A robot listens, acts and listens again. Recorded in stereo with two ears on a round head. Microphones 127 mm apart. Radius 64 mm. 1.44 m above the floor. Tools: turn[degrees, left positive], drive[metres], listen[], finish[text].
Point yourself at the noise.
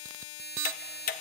Thought: The ticking: about 70° left or 110° left.
Action: turn[70]
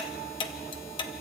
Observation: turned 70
Thought: So it is at 35° left.
Action: turn[35]
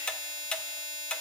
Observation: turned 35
Action: finish[Facing the ticking.]